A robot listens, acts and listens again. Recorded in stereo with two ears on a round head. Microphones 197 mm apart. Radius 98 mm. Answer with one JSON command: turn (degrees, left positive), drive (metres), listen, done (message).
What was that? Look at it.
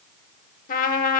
{"turn": 40}
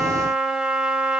{"done": "Facing the trumpet."}